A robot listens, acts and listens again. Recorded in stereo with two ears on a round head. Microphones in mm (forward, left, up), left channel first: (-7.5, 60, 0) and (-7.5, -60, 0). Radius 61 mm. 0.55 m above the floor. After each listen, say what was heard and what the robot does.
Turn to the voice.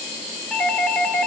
Keep listening.
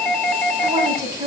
The woman speaking: about 25° right or 155° right. Turn 25° right.
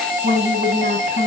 So it is at 130° right. Turn 130° right.
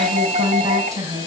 The woman speaking is now 30° right. Turn 30° right.
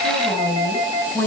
The woman speaking is now 10° left. Turn 10° left.
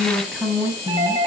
Facing the woman speaking, over 4 m away.